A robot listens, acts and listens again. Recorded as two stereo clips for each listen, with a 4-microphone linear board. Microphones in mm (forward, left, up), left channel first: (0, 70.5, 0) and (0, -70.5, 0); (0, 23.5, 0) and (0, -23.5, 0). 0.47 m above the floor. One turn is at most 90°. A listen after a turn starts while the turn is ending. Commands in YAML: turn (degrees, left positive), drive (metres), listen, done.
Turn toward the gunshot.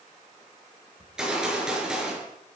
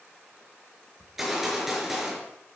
turn: -30
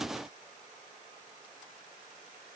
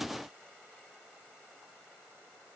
listen: true
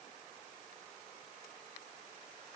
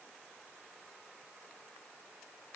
done: "I heard a gunshot, but can't make it out now. It was about 25° left or 145° right."